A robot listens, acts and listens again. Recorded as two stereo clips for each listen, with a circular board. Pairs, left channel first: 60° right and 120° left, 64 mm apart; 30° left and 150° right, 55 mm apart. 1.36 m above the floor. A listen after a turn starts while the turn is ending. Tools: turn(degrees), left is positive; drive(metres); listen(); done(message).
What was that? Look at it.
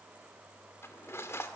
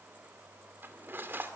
turn(degrees=-100)
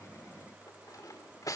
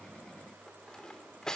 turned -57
turn(degrees=-45)
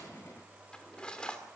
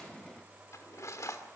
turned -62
turn(degrees=15)
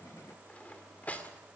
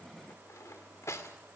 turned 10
done("Facing the cutlery clinking, 2 to 4 m away.")